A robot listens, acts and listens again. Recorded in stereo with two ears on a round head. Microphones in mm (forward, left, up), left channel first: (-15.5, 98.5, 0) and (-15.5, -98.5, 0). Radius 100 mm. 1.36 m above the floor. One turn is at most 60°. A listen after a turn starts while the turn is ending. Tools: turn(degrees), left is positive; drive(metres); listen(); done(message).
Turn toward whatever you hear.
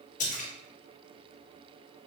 turn(degrees=35)
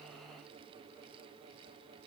listen()
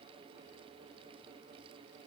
done("I heard a splash, but can't make it out now. It was about straight ahead or 110° left.")